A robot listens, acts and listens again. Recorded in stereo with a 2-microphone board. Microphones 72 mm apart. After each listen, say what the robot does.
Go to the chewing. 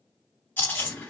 Turn 30° left.
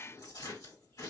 Turn 115° left.
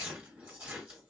Turn 20° right.
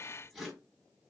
Drive 1.0 m forward.
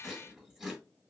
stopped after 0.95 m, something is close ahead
Arrived at the chewing, straight ahead.